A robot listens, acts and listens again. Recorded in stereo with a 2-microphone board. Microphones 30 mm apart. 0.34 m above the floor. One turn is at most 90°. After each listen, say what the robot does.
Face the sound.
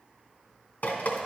Turn 65° left.
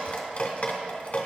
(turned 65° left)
Turn 45° left.
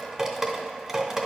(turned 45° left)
Turn 10° right.
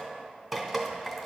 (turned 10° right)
Found it: dripping, straight ahead, under 1 m away.